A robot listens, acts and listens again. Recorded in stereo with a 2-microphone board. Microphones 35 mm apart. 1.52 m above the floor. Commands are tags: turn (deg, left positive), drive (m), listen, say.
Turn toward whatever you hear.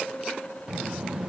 <turn deg="-20"/>
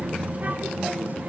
<turn deg="-140"/>
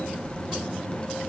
<turn deg="25"/>
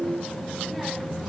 <say>Found it: a child speaking, straight ahead, under 1 m away.</say>